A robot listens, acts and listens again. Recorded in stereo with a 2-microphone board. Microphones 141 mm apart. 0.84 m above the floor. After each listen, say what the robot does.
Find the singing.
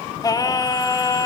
Turn 25° left.
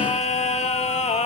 Turn 130° left.
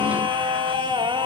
Turn 35° right.
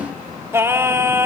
Turn 15° right.
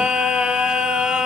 Facing the singing.